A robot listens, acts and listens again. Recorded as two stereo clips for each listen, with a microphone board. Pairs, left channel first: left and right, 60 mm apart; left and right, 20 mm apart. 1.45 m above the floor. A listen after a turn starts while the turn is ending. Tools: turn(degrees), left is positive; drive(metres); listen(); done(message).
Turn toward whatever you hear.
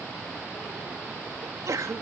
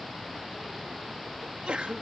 turn(degrees=-90)
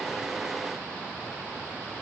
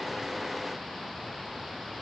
done("I heard a sneeze from this way, but can't make it out now.")